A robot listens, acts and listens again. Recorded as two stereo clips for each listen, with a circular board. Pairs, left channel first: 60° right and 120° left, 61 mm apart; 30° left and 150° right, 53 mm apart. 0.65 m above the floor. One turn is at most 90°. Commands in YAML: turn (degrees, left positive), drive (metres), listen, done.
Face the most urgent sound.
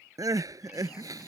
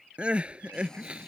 turn: 90
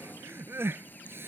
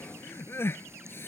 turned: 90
turn: 70
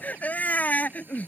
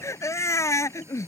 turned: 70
done: "Found it: crying, straight ahead."